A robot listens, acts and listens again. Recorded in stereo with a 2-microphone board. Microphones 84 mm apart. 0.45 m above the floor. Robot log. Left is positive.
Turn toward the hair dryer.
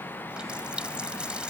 cmd idle
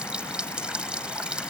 cmd idle
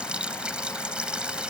end: I can't make out a hair dryer, only a running tap.